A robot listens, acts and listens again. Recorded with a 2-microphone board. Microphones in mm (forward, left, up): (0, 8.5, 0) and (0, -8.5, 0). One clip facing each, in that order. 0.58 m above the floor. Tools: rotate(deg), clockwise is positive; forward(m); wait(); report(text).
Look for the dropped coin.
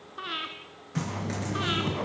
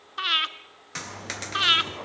rotate(60)
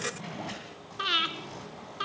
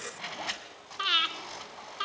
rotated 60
wait()
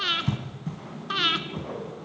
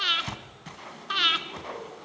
report("I heard a dropped coin, but can't make it out now. It was about straight ahead or 60° right.")